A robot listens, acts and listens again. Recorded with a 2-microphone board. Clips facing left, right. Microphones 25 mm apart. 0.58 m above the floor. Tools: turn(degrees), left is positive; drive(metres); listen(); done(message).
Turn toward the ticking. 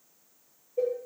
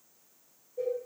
listen()
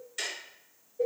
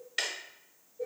turn(degrees=-40)
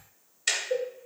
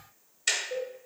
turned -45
done("Found it: ticking, straight ahead, 1 to 2 m away.")